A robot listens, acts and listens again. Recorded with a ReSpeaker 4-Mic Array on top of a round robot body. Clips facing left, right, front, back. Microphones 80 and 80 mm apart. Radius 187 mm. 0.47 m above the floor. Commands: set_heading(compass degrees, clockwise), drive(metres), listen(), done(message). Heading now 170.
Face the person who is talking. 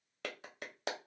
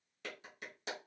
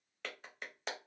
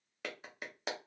listen()
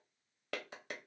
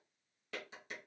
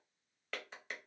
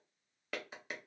listen()
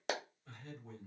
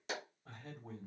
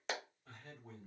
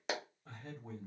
set_heading(295)
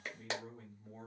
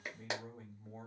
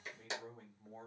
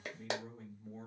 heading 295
set_heading(325)
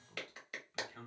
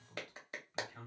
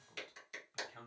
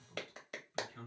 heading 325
set_heading(335)
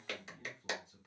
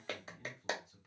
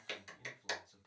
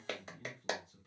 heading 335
done("Found it: a man speaking, straight ahead, 1 to 2 m away.")